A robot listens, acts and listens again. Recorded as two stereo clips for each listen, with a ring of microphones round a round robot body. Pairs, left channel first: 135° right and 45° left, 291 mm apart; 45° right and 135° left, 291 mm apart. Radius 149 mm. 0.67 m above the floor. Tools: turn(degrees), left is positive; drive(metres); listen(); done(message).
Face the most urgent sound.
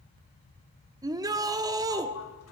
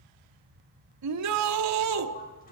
turn(degrees=120)
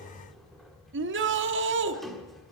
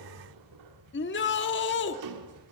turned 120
done("Found it: a shout, straight ahead.")